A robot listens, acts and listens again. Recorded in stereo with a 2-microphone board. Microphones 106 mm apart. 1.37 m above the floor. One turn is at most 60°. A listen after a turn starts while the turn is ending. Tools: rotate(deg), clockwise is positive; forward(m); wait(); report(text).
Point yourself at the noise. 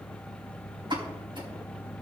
rotate(55)
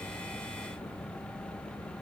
wait()
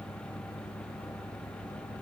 report("I heard a pop, but can't make it out now. It was about straight ahead or 70° right.")